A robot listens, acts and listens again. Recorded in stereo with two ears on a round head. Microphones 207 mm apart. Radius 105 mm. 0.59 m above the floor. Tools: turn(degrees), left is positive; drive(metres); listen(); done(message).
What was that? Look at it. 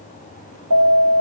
turn(degrees=-75)
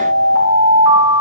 turn(degrees=-15)
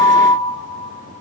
done("Found it: an alarm, straight ahead, 2 to 4 m away.")